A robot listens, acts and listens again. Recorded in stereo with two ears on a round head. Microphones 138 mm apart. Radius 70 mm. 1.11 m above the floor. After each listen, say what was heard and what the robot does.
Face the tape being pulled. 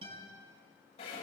Keep listening.
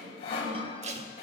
The tape being pulled: about 45° right or 135° right. Turn 45° right.
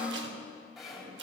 So it is at 90° right. Turn 90° right.
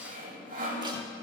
Keep listening.
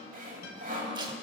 The tape being pulled is now 30° right. Turn 30° right.
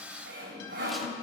Keep listening.
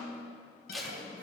Facing the tape being pulled.